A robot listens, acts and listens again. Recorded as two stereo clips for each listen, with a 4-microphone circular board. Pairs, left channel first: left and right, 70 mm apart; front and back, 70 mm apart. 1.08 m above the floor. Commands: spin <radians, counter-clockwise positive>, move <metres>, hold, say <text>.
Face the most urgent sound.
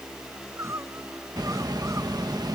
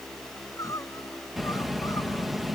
spin -0.70
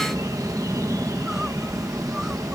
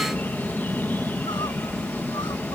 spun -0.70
hold
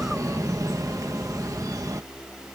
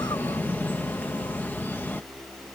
hold
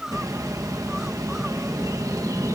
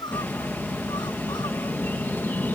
say Found it: crying, straight ahead.